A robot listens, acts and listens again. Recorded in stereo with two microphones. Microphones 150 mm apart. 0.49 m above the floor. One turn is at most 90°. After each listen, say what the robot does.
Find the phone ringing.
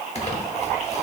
Keep listening.
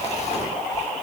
Keep listening.
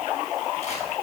I can't make out a phone ringing, only crumpling.